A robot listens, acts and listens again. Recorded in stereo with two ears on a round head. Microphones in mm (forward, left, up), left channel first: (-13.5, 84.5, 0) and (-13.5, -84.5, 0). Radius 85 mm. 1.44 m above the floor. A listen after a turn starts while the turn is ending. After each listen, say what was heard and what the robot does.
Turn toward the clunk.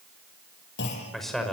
The clunk: about 65° left or 115° left. Turn 65° left.
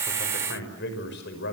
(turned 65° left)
Keep listening.
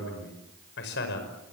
I heard a clunk, but can't make it out now. It was about straight ahead or 50° left.